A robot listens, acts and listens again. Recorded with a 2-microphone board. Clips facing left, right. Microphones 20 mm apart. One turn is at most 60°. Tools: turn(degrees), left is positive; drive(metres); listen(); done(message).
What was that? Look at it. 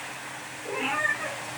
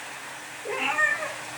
turn(degrees=-55)
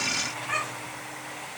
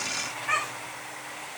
turn(degrees=-60)
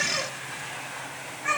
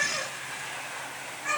turn(degrees=10)
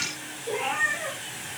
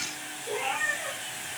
turn(degrees=10)
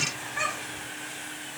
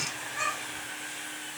done("Facing the cat meowing, over 4 m away.")